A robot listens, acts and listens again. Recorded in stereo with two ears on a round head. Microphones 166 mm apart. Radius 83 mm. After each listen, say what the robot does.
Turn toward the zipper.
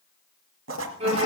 Turn 75° right.
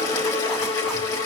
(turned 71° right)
Keep listening.
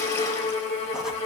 Keep listening.
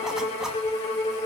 I heard a zipper, but can't make it out now. It was about straight ahead or 35° right.